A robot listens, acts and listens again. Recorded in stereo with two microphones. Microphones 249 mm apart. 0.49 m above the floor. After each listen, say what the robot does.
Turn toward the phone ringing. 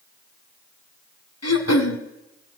Keep listening.
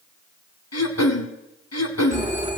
Turn 25° right.
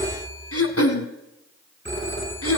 Turn 130° right.
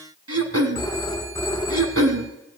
Turn 15° left.
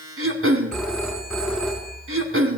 Facing the phone ringing, 2 to 4 m away.